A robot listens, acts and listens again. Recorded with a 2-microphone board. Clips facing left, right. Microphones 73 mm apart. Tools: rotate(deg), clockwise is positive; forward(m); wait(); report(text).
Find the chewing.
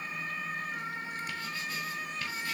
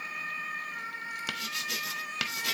wait()
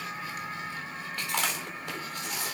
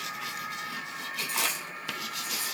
rotate(-90)
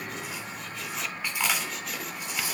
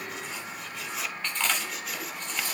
rotate(-10)
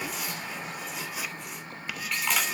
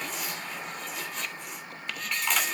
report("Found it: chewing, straight ahead.")